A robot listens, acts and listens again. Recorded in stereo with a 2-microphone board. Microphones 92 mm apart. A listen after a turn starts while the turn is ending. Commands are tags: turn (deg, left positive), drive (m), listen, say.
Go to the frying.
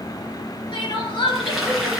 <turn deg="-30"/>
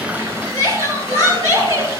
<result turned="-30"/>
<listen/>
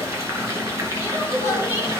<turn deg="-145"/>
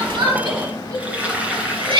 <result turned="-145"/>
<turn deg="-15"/>
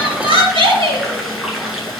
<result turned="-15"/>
<drive m="1.0"/>
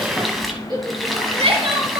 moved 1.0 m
<drive m="1.0"/>
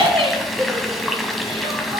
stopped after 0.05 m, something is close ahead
<say>Arrived at the frying, straight ahead.</say>